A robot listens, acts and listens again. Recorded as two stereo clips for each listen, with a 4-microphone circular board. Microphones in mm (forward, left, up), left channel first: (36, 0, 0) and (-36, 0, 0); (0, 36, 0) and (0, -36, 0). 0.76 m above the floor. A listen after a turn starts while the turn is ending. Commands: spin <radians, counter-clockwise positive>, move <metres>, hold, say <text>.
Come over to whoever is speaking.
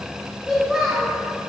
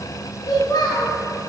spin 1.57
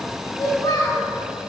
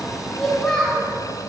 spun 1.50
move 1.0
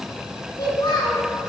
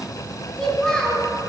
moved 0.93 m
spin 0.17
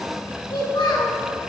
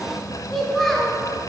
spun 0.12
move 1.0
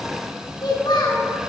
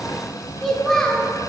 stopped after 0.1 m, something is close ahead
say Arrived at the child speaking, straight ahead.